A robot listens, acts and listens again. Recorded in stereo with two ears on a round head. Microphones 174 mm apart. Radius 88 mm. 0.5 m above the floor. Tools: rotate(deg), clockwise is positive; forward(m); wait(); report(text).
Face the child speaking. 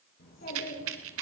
rotate(-45)
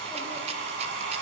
wait()
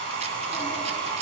wait()
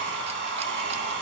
report("I heard a child speaking, but can't make it out now. It was about straight ahead or 90° left.")